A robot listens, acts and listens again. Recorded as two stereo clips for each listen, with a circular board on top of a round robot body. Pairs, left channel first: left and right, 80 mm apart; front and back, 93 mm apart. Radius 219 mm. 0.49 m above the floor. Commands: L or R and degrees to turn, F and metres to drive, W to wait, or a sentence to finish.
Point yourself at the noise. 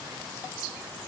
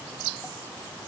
W
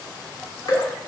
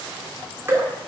L120
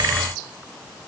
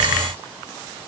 W
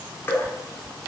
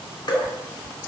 L30
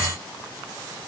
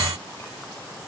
W
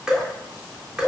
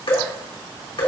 R10
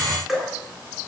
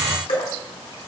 Found it: dripping, straight ahead.